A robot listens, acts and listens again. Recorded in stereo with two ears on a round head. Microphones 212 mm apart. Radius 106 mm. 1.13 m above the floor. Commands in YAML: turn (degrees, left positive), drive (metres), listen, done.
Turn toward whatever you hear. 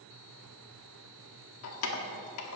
turn: 75
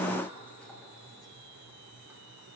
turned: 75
listen: true
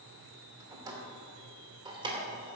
turn: -20
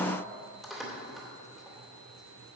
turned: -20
done: "Facing the keys jangling, 2 to 4 m away."